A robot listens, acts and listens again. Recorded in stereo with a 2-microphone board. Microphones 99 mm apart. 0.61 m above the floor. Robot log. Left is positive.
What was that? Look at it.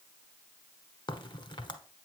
note: The crack: about 50° left or 130° left.
cmd yaw +50
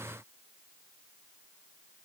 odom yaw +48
cmd idle
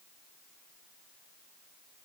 end: I heard a crack, but can't make it out now. It was about 5° left or 80° left.